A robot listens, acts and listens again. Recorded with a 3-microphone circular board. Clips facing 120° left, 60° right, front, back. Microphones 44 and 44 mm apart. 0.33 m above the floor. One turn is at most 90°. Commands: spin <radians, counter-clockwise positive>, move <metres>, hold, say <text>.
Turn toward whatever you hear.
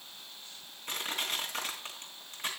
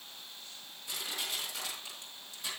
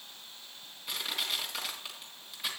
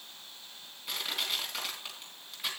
spin 1.57
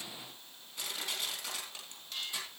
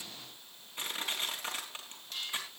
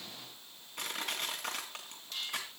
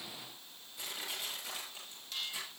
say Found it: crushing, straight ahead.